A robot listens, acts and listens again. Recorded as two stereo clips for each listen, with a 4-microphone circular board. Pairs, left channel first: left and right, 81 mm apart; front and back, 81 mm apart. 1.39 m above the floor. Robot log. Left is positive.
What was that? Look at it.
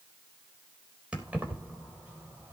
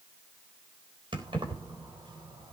note: The keys jangling: 160° right.
cmd yaw -160
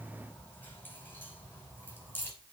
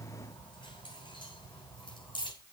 note: The keys jangling is now 25° left.
cmd yaw +25
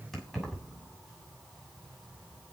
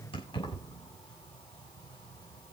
end: Facing the keys jangling, over 4 m away.